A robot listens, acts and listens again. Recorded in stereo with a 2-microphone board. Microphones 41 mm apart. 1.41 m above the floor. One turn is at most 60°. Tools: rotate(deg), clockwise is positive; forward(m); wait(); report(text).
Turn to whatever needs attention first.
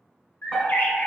rotate(-30)
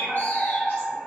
rotate(30)
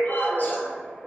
report("Found it: a fire alarm, straight ahead.")